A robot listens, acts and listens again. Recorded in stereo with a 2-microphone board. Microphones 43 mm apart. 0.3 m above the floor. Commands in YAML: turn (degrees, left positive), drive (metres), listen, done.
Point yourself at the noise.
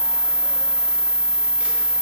listen: true
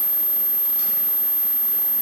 listen: true
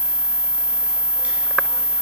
done: "I can't make out anything to turn to."